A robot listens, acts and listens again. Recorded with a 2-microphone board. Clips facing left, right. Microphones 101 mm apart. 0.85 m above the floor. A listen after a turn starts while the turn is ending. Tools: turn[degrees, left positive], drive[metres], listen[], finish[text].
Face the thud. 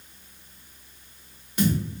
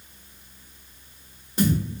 Thought: The thud: about 30° right or 150° right.
Action: turn[-30]
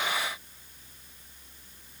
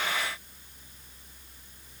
Action: listen[]
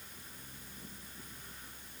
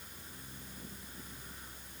Action: finish[I heard a thud, but can't make it out now. It was about straight ahead or 120° right.]